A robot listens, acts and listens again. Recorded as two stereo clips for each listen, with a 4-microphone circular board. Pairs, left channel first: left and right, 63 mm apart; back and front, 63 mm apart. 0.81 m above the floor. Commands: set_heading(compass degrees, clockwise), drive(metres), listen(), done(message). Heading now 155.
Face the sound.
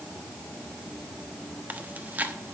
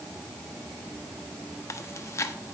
set_heading(305)
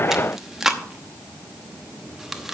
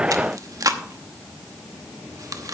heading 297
done("Found it: chewing, straight ahead, under 1 m away.")